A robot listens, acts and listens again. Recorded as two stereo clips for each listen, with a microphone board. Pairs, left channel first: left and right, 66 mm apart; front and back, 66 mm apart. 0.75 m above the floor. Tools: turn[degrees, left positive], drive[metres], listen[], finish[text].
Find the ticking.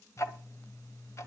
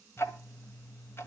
Thought: The ticking: 50° left.
Action: turn[50]
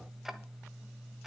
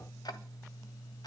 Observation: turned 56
Action: finish[Facing the ticking.]